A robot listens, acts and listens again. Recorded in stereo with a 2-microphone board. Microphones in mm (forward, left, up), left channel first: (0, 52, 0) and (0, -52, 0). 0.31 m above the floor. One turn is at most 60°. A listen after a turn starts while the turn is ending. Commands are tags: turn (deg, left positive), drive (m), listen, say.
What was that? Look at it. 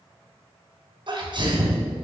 <turn deg="-50"/>
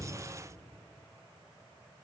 <listen/>
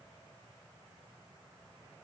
<say>I heard a sneeze, but can't make it out now. It was about straight ahead or 80° right.</say>